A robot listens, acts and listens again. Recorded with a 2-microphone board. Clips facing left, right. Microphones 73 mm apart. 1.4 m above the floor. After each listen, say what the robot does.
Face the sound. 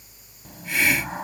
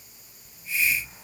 Turn 70° left.
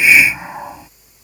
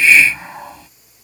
Turn 15° left.
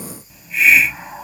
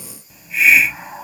Found it: a hiss, straight ahead.